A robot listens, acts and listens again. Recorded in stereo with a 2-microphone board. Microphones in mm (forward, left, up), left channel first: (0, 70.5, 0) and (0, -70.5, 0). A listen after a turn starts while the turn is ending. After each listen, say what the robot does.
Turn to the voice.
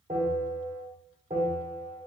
Keep listening.
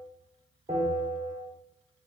Keep listening.
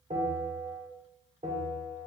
I can't make out anyone speaking to turn to.